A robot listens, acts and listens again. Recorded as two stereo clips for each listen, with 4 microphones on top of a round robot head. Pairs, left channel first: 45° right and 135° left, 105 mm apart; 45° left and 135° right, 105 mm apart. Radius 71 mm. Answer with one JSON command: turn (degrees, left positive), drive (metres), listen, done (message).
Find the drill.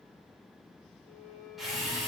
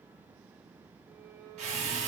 {"turn": -140}
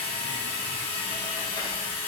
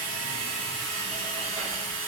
{"done": "Facing the drill, 1 to 2 m away."}